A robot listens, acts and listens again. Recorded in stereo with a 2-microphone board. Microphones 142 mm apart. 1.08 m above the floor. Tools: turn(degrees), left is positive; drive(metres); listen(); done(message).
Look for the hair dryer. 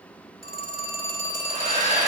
turn(degrees=-65)
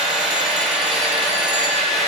done("Facing the hair dryer, 2 to 4 m away.")